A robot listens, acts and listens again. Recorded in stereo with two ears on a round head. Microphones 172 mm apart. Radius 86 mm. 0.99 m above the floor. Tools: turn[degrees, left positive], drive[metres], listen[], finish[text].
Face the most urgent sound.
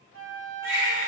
Action: turn[-30]
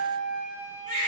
Thought: So it is at 140° right.
Action: turn[-140]
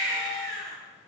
Thought: The baby crying is now 20° left.
Action: turn[20]
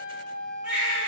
Action: finish[Found it: a baby crying, straight ahead, 1 to 2 m away.]